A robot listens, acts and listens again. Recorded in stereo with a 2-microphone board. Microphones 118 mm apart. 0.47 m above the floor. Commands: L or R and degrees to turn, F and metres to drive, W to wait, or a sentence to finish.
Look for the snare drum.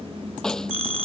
L30
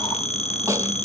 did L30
R25
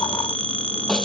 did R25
W
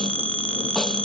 W
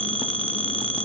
I heard a snare drum from this way, but can't make it out now.